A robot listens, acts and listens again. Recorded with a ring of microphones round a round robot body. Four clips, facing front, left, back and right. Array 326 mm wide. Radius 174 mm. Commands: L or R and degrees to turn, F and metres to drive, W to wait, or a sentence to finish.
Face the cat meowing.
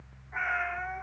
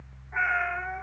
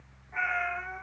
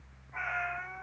L75
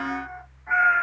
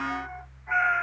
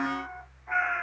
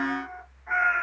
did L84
R15
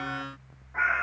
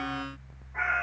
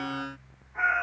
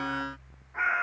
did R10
R10
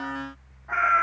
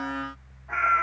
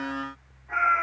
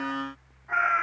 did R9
Found it: a cat meowing, straight ahead.